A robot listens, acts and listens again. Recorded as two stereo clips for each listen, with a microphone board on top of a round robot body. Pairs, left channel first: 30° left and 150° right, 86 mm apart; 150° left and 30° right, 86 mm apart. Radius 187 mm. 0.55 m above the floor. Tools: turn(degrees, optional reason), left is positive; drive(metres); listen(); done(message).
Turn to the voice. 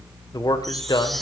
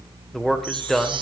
turn(degrees=65, reason="The man speaking: 65° left.")
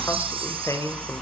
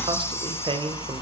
turn(degrees=-25, reason="The man speaking is now 25° right.")
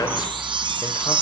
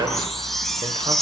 listen()
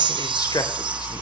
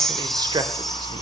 listen()
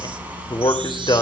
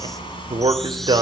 done("Facing the man speaking, 2 to 4 m away.")